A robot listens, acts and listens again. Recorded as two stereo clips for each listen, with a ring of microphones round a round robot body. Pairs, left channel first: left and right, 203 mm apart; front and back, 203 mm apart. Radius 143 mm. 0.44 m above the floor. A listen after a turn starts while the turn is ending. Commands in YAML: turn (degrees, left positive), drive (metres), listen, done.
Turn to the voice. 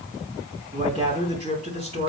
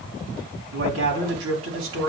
turn: -160
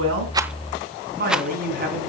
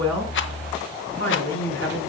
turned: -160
turn: -45
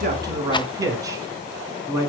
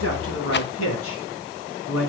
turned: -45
turn: -15
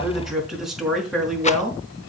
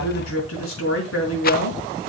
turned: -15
done: "Found it: a man speaking, straight ahead."